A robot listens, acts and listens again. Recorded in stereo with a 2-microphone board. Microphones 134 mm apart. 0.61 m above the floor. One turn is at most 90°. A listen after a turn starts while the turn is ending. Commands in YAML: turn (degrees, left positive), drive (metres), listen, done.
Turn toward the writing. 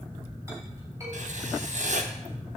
turn: -65
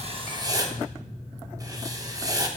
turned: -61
turn: -30
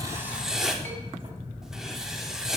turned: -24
done: "Facing the writing."